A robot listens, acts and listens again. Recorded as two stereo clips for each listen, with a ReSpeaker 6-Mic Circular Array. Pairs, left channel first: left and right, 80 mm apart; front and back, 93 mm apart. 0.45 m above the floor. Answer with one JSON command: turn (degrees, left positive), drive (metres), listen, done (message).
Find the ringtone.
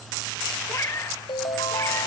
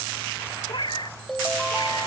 {"turn": 85}
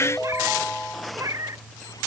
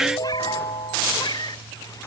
{"turn": 10}
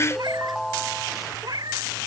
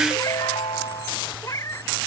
{"done": "Found it: a ringtone, straight ahead."}